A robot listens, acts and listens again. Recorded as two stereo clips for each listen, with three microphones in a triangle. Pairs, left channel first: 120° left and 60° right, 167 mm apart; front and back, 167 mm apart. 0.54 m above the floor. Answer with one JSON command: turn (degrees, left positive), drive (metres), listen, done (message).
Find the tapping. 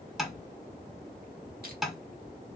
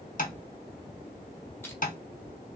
{"turn": 30}
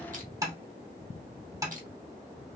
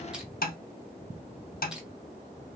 {"done": "Facing the tapping, under 1 m away."}